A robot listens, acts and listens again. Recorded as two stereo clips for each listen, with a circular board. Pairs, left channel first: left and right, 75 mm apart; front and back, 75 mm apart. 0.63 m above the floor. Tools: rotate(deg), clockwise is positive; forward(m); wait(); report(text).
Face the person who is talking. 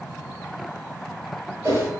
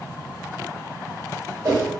wait()
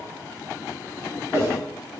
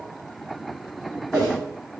wait()
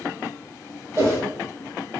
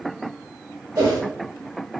report("I can't make out anyone speaking, only a whoosh.")